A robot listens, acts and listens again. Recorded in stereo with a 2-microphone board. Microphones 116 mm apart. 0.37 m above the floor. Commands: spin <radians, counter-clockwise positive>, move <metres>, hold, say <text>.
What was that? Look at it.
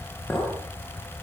spin 0.52
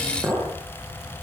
spin -0.35
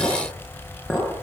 say Found it: a clink, straight ahead, over 4 m away.